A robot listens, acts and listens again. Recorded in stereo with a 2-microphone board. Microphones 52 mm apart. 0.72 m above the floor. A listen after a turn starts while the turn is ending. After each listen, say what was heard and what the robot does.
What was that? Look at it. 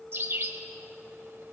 The bird: about 50° right or 130° right. Turn 50° right.
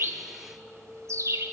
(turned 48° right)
So it is at 85° right. Turn 85° right.
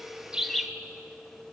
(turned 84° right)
Facing the bird.